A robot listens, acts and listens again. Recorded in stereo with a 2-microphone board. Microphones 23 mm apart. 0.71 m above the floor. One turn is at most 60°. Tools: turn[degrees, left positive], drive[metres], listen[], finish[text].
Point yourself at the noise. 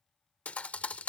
Action: turn[60]
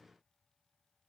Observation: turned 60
Thought: Nothing new. It was at 30° left.
Action: turn[30]
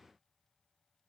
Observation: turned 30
Action: finish[I heard a thud from this way, but can't make it out now.]